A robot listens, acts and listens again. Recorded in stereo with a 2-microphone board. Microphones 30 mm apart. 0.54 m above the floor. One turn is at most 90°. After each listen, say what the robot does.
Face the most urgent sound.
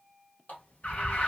Turn 55° left.
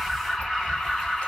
Facing the alarm.